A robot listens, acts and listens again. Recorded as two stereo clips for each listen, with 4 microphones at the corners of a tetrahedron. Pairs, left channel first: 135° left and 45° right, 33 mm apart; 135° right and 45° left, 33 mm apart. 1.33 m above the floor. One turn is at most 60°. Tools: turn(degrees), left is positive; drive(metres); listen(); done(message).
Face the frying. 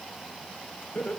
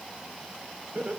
listen()
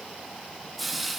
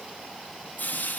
turn(degrees=-60)
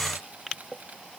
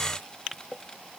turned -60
turn(degrees=-60)
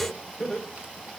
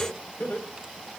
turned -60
turn(degrees=-10)
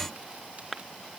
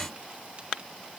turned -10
done("Facing where the frying came from. I can't hear it now.")